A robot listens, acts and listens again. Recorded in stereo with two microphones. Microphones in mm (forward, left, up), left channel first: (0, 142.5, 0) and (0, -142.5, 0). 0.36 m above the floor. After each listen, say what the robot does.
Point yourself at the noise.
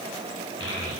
Turn 45° left.
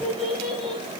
Found it: a child speaking, straight ahead.